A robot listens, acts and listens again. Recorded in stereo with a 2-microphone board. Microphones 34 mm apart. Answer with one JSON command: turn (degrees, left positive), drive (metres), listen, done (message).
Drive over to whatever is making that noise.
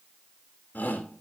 {"turn": 55}
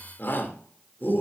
{"turn": 75}
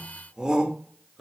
{"turn": -20}
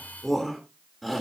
{"drive": 1.0}
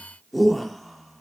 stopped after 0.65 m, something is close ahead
{"done": "Something is in my way. I am facing the shout but have not reached it."}